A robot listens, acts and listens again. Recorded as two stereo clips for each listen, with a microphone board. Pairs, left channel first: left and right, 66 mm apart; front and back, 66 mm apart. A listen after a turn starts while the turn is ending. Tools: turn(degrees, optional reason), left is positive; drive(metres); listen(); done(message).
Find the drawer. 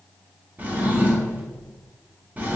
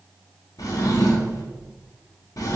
turn(degrees=-25, reason="The drawer: 25° right.")
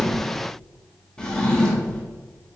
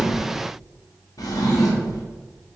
turn(degrees=15, reason="The drawer is now 15° left.")
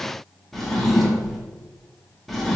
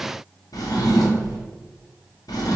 done("Found it: a drawer, straight ahead.")